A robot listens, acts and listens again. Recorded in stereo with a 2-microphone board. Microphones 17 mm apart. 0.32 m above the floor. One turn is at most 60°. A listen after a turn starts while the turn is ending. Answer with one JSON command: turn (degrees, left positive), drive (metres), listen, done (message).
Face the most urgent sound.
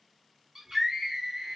{"turn": -25}
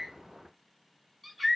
{"done": "Found it: a scream, straight ahead, 2 to 4 m away."}